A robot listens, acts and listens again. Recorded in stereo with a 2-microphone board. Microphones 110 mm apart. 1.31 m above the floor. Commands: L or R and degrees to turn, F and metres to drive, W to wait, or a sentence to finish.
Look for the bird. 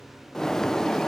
L30
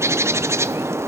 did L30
R25
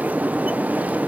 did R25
R15
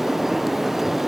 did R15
Found it: a bird, straight ahead, under 1 m away.